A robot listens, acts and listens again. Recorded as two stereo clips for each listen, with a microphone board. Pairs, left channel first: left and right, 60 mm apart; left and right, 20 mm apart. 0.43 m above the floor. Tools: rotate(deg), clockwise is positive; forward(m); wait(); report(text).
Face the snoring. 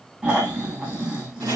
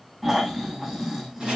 rotate(20)
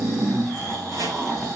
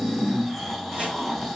report("Facing the snoring.")